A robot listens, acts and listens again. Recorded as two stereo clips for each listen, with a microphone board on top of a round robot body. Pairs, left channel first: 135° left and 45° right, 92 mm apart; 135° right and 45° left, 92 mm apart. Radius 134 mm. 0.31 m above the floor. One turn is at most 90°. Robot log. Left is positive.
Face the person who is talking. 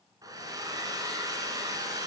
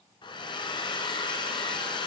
cmd idle
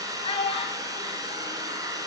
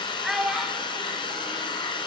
note: The child speaking: 130° left.
cmd yaw +90
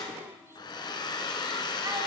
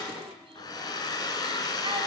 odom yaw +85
note: Nothing new. It was at 45° left.
cmd yaw +45
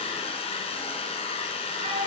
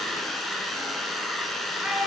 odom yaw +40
note: The child speaking is now 35° right.
cmd yaw -35
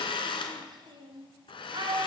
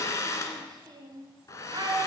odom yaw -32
end: Found it: a child speaking, straight ahead, 2 to 4 m away.